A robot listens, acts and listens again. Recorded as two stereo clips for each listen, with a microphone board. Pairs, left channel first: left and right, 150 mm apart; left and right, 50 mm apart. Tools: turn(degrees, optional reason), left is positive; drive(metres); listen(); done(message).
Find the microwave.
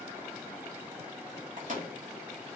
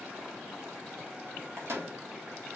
turn(degrees=-60, reason="The microwave: about 60° right or 120° right.")
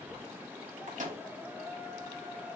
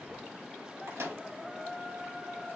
turn(degrees=-60, reason="So it is at 60° right.")
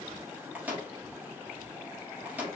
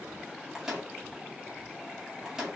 turn(degrees=-10, reason="The microwave is now 10° right.")
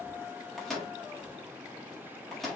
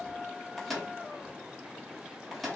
done("Found it: a microwave, straight ahead.")